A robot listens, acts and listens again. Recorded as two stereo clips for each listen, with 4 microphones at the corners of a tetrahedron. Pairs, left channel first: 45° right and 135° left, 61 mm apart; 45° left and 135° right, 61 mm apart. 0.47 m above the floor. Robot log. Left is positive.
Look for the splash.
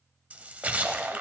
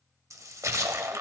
note: The splash: 160° right.
cmd yaw -160
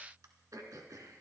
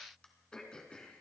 end: Facing where the splash came from. I can't hear it now.